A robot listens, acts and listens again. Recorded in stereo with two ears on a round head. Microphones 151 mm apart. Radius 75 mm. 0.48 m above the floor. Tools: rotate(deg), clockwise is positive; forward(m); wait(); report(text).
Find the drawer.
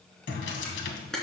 rotate(-90)
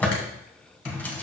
rotate(-10)
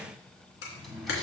report("Facing the drawer, 1 to 2 m away.")